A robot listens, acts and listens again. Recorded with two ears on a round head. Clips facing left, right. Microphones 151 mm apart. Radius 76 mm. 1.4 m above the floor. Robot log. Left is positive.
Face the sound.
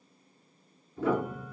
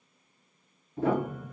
note: The piano: about 50° right or 130° right.
cmd yaw -50
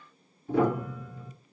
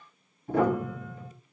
note: So it is at 60° right.
cmd yaw -60
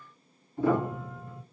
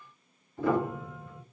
note: The piano is now 20° left.
cmd yaw +20
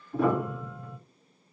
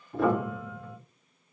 end: Found it: a piano, straight ahead.